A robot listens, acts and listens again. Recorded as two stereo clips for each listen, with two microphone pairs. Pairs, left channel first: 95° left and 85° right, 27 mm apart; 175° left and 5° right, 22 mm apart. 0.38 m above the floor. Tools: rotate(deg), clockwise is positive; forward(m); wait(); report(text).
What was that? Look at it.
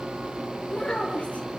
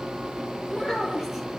rotate(-65)
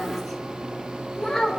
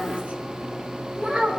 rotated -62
report("Facing the child speaking.")